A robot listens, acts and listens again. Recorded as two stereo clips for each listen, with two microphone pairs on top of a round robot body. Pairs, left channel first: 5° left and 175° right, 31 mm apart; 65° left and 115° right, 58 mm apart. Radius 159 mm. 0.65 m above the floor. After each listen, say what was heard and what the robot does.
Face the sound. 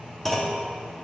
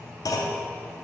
The clunk: 80° left. Turn 80° left.
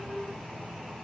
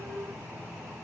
Facing where the clunk came from. I can't hear it now.